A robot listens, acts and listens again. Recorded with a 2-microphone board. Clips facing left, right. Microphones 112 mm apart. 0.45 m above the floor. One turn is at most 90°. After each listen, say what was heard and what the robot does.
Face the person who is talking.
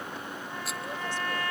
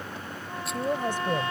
The woman speaking: about 50° right or 130° right. Turn 50° right.
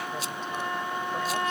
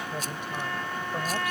Keep listening.
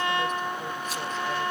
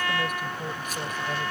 Keep listening.
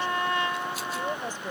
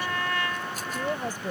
So it is at 15° right. Turn 15° right.
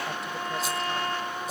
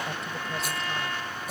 Keep listening.
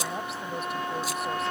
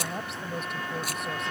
Found it: a woman speaking, straight ahead.